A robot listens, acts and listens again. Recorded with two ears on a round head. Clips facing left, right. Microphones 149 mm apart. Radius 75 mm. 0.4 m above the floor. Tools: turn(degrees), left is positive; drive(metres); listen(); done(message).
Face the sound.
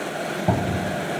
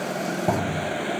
turn(degrees=30)
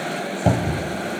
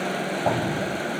turn(degrees=150)
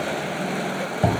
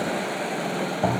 turn(degrees=20)
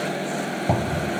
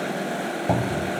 done("Found it: a cupboard door, straight ahead, under 1 m away.")